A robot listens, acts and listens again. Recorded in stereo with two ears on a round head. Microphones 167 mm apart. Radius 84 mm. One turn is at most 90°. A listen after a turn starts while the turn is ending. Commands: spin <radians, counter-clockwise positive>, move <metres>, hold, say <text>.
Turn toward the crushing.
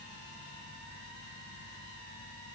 hold
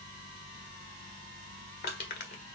spin 0.96
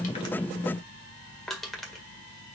say Found it: crushing, straight ahead.